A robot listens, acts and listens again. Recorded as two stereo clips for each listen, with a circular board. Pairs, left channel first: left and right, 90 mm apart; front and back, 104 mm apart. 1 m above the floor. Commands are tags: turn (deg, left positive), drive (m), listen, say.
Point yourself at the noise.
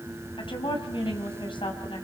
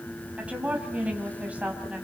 <turn deg="105"/>
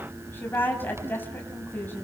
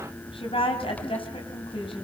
<turn deg="25"/>
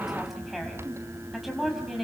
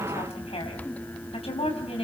<say>Found it: a woman speaking, straight ahead.</say>